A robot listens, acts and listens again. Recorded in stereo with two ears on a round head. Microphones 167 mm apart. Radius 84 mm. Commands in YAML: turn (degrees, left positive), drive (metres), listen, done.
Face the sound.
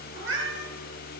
turn: -75
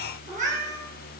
turn: -40
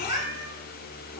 turn: -20
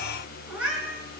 done: "Facing the cat meowing, over 4 m away."